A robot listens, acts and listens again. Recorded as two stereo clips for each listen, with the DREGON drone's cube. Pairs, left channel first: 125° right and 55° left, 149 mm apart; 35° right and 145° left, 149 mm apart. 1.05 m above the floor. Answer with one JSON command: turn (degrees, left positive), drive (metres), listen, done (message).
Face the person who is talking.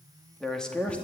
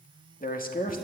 {"turn": -40}
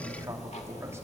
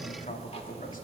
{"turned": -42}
{"listen": true}
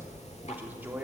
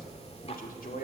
{"listen": true}
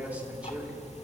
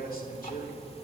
{"turn": -25}
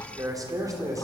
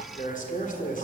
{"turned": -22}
{"turn": -10}
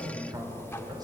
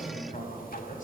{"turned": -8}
{"done": "Found it: a man speaking, straight ahead."}